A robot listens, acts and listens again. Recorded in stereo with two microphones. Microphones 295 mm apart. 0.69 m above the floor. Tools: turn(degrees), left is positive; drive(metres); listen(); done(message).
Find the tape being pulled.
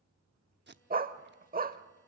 turn(degrees=-35)
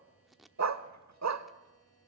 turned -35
done("Found it: tape being pulled, straight ahead.")